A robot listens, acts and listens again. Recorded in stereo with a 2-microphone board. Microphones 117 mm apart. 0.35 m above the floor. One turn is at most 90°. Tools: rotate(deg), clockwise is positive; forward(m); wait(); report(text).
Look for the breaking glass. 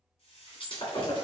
rotate(-50)
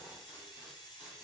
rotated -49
wait()
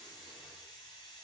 report("I heard breaking glass, but can't make it out now. It was about straight ahead or 80° left.")